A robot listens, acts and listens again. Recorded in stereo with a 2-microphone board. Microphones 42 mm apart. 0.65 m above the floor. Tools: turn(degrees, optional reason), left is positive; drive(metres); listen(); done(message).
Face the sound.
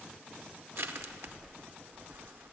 turn(degrees=-65, reason="The crushing: about 65° right or 115° right.")
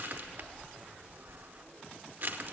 turn(degrees=-45, reason="So it is at 45° right.")
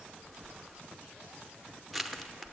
done("Facing the crushing.")